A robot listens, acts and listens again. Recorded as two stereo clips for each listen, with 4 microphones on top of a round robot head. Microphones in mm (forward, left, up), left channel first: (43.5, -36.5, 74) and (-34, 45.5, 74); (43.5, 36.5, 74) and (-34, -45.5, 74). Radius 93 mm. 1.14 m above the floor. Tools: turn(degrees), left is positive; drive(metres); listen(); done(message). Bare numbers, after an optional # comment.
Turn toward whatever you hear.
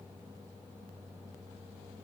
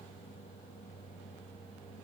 listen()
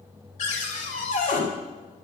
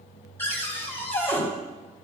# The cupboard door: 25° right.
turn(-25)
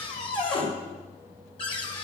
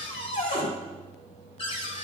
done("Facing the cupboard door.")